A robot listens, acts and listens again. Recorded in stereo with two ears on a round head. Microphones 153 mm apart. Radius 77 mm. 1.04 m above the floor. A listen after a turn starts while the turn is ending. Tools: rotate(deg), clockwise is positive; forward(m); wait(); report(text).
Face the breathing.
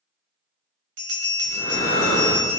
rotate(-50)
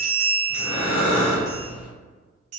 rotate(-85)
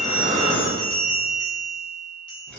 rotate(-10)
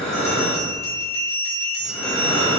report("Facing the breathing, under 1 m away.")